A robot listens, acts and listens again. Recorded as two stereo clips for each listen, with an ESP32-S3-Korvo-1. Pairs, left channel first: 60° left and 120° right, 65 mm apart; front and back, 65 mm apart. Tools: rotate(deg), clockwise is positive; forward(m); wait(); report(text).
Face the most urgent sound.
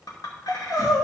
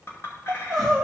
rotate(-85)
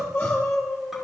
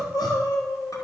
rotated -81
report("Found it: crying, straight ahead.")